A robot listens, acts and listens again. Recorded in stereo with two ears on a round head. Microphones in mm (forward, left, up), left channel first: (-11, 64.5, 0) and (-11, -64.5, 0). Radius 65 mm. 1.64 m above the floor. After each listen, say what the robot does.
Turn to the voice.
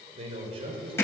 Turn 40° right.
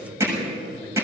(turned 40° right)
Turn 105° right.
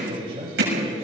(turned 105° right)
Turn 35° right.
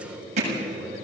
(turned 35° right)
Facing the man speaking, over 4 m away.